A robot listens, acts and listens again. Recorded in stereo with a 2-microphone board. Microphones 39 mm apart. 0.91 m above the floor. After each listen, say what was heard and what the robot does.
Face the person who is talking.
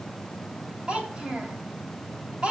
The child speaking: about 25° right or 155° right. Turn 25° right.
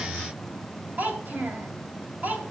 So it is at 130° right. Turn 130° right.
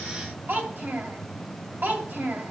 The child speaking is now 55° right. Turn 55° right.
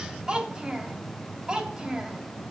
The child speaking is now 20° right. Turn 20° right.
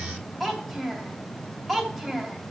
Facing the child speaking.